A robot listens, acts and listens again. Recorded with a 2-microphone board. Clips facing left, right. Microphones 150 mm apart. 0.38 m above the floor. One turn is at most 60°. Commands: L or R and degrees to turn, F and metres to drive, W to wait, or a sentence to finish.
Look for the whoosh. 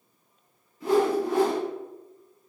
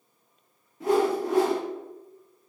R60
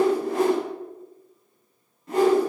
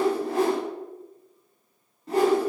R35
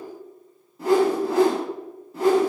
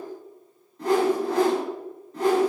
Facing the whoosh.